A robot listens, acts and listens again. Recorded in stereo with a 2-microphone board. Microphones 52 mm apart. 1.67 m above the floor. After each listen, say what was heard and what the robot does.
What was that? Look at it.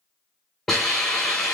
Turn 30° left.
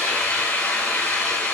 So it is at 140° left. Turn 140° left.
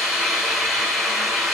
Found it: a hiss, straight ahead, 2 to 4 m away.